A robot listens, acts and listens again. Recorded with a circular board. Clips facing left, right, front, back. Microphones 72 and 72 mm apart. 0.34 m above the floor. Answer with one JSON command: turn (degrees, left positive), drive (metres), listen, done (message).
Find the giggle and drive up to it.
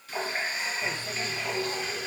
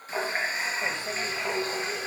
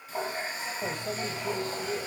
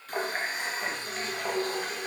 {"listen": true}
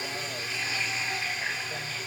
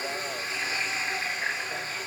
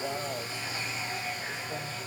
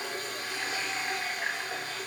{"listen": true}
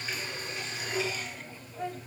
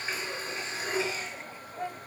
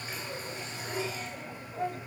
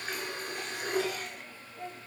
{"done": "I can't make out a giggle to turn to."}